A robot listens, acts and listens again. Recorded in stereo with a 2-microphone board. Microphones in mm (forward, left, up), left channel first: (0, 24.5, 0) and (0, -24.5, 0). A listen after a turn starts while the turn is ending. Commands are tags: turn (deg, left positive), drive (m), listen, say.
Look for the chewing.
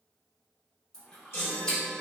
<turn deg="15"/>
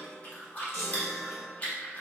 <turn deg="150"/>
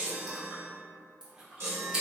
<turn deg="-15"/>
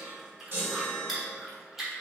<say>Facing the chewing.</say>